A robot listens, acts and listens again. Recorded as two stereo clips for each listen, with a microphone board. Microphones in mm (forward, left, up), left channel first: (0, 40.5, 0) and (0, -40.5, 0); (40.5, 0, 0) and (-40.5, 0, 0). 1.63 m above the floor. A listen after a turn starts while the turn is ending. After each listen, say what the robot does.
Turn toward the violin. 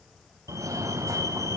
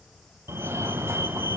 Keep listening.
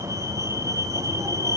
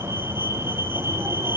Keep listening.
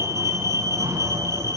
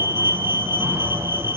I can't make out a violin, only a fire alarm.